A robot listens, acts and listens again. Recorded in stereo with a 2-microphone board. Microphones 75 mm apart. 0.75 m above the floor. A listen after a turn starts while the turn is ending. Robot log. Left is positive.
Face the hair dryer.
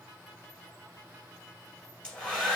cmd yaw +30
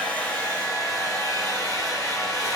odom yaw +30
note: So it is at 135° left.
cmd yaw +135
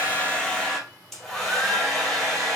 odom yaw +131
end: Facing the hair dryer.